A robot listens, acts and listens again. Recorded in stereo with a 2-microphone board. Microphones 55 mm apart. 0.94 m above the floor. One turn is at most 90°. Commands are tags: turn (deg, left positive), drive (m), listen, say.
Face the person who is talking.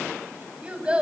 <turn deg="-15"/>
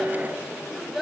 <say>Facing the child speaking.</say>